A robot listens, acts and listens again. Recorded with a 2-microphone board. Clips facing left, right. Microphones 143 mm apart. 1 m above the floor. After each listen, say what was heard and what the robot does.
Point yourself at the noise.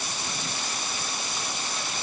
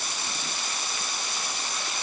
Keep listening.
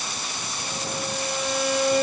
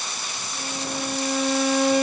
Turn 90° right.
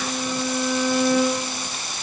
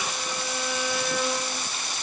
Facing the violin, over 4 m away.